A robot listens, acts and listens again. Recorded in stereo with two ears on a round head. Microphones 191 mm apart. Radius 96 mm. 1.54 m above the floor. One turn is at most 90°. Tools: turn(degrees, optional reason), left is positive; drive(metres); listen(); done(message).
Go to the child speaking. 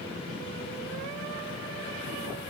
listen()
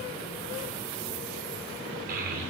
turn(degrees=-40, reason="The child speaking: about 40° right or 140° right.")
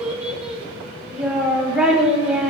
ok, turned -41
drive(metres=1.0)
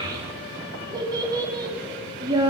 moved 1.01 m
turn(degrees=-20, reason="The child speaking is now 20° right.")
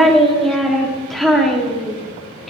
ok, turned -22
drive(metres=1.0)
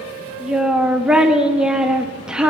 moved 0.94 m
drive(metres=1.0)
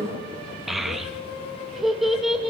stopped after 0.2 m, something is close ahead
done("Arrived at the child speaking, straight ahead.")